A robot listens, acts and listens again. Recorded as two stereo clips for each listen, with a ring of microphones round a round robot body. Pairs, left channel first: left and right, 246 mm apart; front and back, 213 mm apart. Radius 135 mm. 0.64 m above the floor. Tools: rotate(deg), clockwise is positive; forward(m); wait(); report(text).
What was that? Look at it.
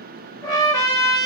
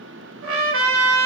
rotate(-165)
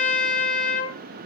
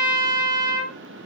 rotate(-35)
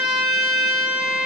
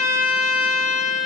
report("Facing the trumpet.")